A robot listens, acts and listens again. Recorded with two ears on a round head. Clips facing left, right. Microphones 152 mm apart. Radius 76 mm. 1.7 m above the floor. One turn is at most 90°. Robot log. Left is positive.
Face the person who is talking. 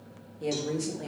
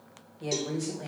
note: The woman speaking: about 30° left or 150° left.
cmd yaw +30
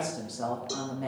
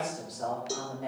note: So it is at 115° left.
cmd yaw +90
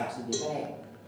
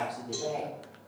note: The woman speaking is now 30° left.
cmd yaw +30
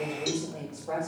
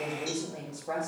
note: The woman speaking is now 10° right.
cmd yaw -10
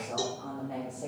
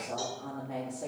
end: Facing the woman speaking.